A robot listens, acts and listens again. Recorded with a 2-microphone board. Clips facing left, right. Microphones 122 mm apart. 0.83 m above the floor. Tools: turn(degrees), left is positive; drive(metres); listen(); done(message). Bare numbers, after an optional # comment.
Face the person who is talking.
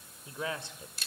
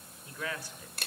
# The man speaking: about 25° left or 155° left.
turn(25)
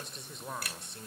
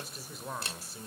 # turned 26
done("Facing the man speaking.")